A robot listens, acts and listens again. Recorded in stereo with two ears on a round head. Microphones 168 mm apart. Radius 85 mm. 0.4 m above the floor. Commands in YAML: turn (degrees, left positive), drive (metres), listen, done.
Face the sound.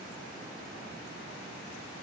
listen: true
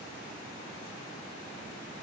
listen: true
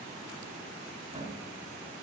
turn: -40
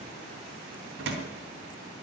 turn: -95
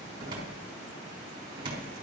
turn: -25
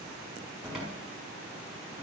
done: "Facing the cupboard door."